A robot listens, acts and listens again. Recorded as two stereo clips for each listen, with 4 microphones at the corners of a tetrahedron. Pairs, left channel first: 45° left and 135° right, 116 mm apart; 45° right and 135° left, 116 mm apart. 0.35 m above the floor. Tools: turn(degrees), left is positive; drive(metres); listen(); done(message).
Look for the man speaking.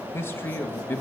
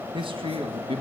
turn(degrees=115)
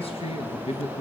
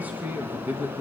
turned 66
turn(degrees=65)
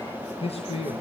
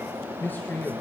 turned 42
turn(degrees=30)
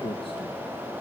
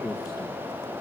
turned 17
turn(degrees=15)
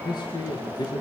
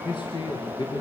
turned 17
done("Found it: a man speaking, straight ahead, over 4 m away.")